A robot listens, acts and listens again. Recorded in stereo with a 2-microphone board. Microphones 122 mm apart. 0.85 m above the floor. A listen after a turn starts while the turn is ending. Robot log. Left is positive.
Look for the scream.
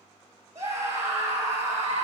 note: The scream: about 25° right or 155° right.
cmd yaw -25
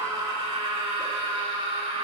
note: So it is at 130° right.
cmd yaw -130
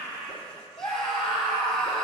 end: Facing the scream, 2 to 4 m away.